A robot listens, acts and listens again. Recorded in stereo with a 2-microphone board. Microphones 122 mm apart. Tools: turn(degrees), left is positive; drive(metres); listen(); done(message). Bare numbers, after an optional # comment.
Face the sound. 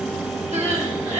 turn(-90)
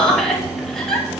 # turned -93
done("Facing the crying, 2 to 4 m away.")